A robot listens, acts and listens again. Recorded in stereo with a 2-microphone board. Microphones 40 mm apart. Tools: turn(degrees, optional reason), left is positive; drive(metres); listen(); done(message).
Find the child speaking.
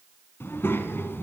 turn(degrees=70, reason="The child speaking: about 70° left or 110° left.")
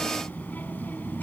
turn(degrees=50, reason="So it is at 50° left.")
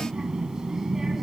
turn(degrees=-10, reason="The child speaking is now 10° right.")
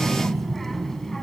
turn(degrees=10, reason="The child speaking is now 10° left.")
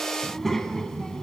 turn(degrees=15, reason="The child speaking is now 15° left.")
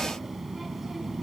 done("Found it: a child speaking, straight ahead, 2 to 4 m away.")